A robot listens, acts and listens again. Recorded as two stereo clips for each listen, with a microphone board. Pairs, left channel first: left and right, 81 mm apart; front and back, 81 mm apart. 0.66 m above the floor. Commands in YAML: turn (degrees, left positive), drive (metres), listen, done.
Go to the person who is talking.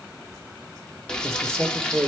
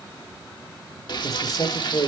turn: -35
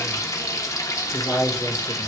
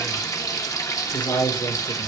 drive: 1.0
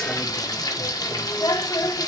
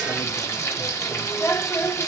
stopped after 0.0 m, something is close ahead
listen: true
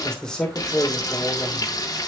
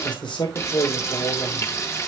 turn: 10
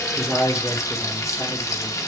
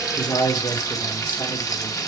done: "Blocked. The man speaking is further on, straight ahead."